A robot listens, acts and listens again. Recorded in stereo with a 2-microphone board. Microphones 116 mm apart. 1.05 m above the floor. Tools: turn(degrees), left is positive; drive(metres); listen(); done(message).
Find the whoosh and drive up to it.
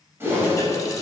turn(degrees=-20)
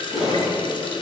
drive(metres=1.0)
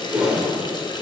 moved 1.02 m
turn(degrees=-10)
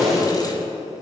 drive(metres=1.0)
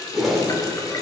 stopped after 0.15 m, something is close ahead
done("Arrived at the whoosh, straight ahead.")